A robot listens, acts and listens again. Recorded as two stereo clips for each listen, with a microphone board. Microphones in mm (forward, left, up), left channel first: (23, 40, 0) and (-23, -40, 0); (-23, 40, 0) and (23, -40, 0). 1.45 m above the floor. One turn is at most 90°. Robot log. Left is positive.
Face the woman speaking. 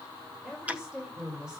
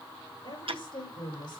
note: The woman speaking: 160° left.
cmd yaw +90
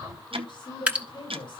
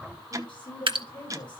note: The woman speaking is now 95° left.
cmd yaw +90
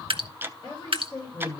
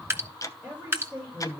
note: The woman speaking is now 20° left.
cmd yaw +20
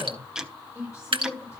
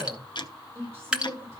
end: Found it: a woman speaking, straight ahead, over 4 m away.